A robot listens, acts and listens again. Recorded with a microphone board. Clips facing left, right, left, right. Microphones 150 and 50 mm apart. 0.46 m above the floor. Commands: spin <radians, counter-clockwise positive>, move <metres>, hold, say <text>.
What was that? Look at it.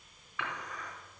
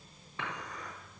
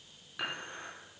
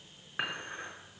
spin -0.52
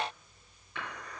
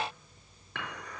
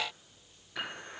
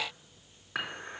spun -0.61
spin -2.01
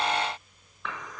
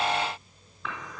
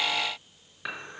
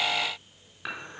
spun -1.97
say Facing the dishes clattering.